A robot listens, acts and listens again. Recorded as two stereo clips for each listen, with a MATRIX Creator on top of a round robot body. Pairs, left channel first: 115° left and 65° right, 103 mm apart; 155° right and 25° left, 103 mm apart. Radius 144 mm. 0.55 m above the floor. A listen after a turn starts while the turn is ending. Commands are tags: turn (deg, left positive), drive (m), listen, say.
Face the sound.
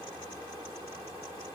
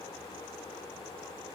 <listen/>
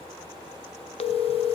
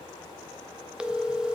<turn deg="105"/>
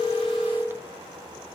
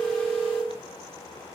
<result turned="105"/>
<say>Facing the phone ringing, under 1 m away.</say>